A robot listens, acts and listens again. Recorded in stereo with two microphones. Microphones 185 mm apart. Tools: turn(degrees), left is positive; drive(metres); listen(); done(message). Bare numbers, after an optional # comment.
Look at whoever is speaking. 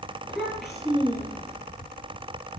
turn(-30)
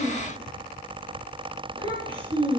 # So it is at 145° right.
turn(-145)
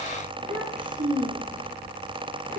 # The child speaking is now 45° right.
turn(-45)
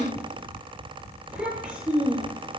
done("Found it: a child speaking, straight ahead, over 4 m away.")